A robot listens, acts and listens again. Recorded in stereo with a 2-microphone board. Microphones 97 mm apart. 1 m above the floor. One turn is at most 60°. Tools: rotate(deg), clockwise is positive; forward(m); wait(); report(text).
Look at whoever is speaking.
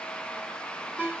wait()
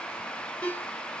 wait()
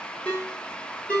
report("I can't make out anyone speaking, only a ringtone.")